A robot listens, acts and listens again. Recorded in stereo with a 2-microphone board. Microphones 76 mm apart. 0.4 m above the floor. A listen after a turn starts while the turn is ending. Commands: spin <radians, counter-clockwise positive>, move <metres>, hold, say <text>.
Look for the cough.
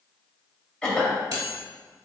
spin 0.52
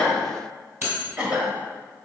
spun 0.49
spin -0.35
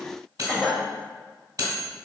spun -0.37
say Facing the cough.